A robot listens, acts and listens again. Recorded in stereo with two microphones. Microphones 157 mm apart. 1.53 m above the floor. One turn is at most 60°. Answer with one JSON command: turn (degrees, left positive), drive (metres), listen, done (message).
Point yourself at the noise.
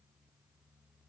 {"listen": true}
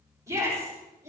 {"turn": -20}
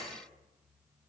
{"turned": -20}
{"listen": true}
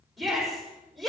{"done": "Found it: a shout, straight ahead, over 4 m away."}